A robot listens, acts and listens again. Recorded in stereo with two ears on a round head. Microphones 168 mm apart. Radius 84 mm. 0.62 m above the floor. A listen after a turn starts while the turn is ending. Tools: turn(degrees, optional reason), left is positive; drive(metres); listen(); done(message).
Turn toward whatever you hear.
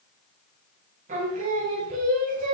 turn(degrees=-40, reason="The singing: about 40° right or 140° right.")
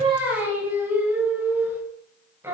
turn(degrees=-10, reason="So it is at 10° right.")
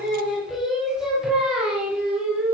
done("Facing the singing.")